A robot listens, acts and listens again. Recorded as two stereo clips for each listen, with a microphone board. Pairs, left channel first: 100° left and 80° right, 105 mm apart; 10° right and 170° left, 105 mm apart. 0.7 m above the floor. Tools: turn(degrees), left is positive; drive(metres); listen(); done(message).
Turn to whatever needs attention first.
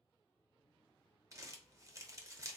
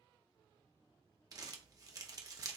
listen()
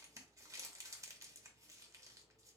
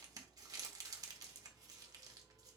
listen()
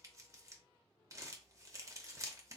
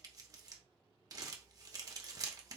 done("I can't make out anything urgent to turn to.")